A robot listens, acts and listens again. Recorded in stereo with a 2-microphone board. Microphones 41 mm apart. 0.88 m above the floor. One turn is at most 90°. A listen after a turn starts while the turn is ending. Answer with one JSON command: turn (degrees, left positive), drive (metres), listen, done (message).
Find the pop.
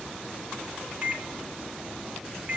{"listen": true}
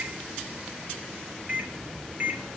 {"listen": true}
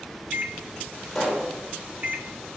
{"turn": 30}
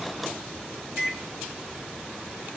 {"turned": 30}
{"listen": true}
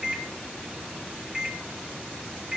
{"done": "I heard a pop, but can't make it out now. It was about 20° right or 140° left."}